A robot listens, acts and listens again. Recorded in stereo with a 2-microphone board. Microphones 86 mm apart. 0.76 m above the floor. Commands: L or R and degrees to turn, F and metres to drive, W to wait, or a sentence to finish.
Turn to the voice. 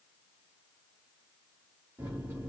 W
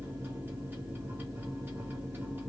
W
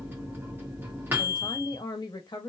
L50
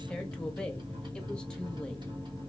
W
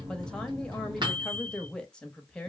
L10
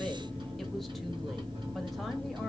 W
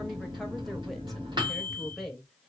Found it: a woman speaking, straight ahead, under 1 m away.